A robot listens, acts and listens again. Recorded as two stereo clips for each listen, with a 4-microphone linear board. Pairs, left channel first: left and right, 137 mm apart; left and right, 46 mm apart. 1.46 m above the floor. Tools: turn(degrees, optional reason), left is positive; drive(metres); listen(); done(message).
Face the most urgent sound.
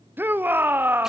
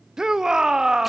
turn(degrees=-30)
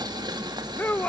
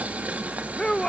turn(degrees=15, reason="So it is at 15° left.")
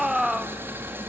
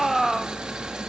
done("Found it: a shout, straight ahead.")